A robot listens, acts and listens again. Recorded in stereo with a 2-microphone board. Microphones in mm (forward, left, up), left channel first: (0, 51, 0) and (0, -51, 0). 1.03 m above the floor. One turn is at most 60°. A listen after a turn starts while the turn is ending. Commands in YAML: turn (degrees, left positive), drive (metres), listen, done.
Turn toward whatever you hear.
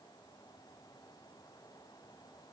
listen: true
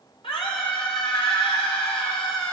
turn: 60
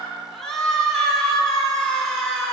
done: "Found it: a scream, straight ahead, 2 to 4 m away."